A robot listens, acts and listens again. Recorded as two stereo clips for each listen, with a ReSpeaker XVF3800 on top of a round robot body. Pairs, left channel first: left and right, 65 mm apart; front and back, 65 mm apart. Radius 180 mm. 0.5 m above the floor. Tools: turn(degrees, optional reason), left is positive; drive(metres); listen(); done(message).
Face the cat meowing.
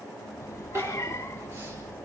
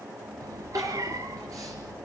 turn(degrees=140, reason="The cat meowing: 140° left.")
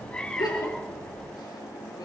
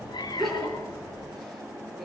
turn(degrees=15, reason="The cat meowing is now 15° left.")
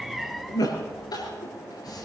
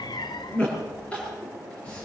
done("Facing the cat meowing, 1 to 2 m away.")